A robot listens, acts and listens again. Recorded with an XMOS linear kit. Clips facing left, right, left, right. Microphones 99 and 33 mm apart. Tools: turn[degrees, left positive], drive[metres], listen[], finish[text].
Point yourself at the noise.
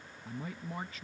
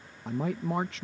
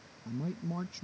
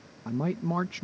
Action: turn[-90]
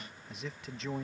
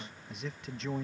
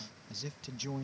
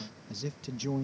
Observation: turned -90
Action: finish[Facing the man speaking.]